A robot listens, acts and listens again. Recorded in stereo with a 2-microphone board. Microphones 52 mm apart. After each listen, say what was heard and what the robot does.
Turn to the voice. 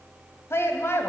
The woman speaking: about 55° left or 125° left. Turn 55° left.
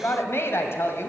So it is at 65° left. Turn 65° left.
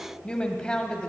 The woman speaking is now 20° left. Turn 20° left.
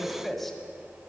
Facing the woman speaking, 1 to 2 m away.